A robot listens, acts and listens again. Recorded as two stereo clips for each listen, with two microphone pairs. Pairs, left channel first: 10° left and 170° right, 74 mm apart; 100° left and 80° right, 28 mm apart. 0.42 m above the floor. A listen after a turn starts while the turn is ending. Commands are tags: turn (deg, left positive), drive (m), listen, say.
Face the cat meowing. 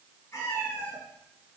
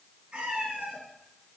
<turn deg="-45"/>
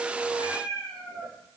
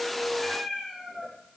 <say>Facing the cat meowing.</say>